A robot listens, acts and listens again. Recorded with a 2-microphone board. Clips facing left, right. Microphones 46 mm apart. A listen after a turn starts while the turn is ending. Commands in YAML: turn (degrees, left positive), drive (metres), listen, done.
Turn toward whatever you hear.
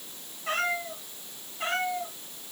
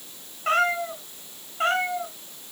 turn: -60
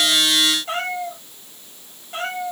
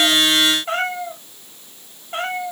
turn: -55
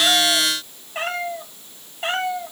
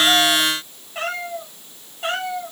turn: 20
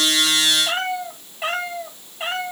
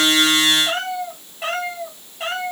done: "Facing the cat meowing."